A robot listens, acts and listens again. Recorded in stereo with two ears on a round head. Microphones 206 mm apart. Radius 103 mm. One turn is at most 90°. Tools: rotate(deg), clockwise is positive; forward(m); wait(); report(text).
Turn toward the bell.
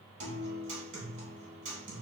wait()
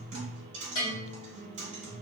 rotate(-60)
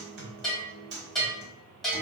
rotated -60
report("Facing the bell.")